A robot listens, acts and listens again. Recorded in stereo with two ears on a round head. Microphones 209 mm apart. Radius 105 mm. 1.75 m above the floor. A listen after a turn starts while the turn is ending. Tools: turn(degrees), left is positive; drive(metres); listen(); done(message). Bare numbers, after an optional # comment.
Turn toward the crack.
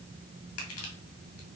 listen()
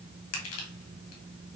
listen()
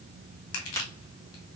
turn(30)
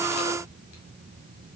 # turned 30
listen()
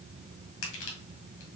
done("I heard a crack, but can't make it out now. It was about 15° right or 135° left.")